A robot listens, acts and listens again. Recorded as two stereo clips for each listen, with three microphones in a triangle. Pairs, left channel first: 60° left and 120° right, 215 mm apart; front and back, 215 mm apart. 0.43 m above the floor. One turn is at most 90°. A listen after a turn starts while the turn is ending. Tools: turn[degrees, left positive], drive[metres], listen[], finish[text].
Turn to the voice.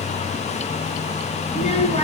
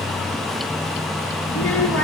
Action: finish[Found it: a child speaking, straight ahead, over 4 m away.]